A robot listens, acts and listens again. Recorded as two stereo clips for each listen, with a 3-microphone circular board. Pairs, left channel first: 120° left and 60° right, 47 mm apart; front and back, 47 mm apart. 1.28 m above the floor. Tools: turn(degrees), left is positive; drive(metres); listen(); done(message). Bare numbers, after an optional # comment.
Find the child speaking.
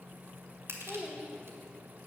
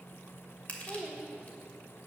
# The child speaking: 135° right.
turn(-135)
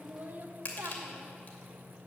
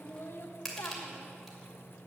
# The child speaking is now 25° right.
turn(-25)
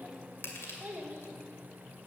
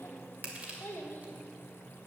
# The child speaking is now 25° right.
turn(-25)
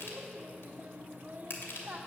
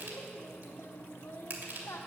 done("Found it: a child speaking, straight ahead.")